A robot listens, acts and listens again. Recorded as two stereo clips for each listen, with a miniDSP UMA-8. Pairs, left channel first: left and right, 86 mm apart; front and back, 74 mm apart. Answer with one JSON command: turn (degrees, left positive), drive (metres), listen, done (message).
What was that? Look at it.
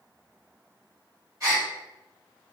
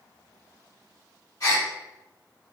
{"turn": -40}
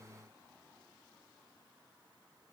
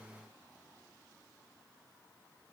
{"done": "I heard a gasp from this way, but can't make it out now."}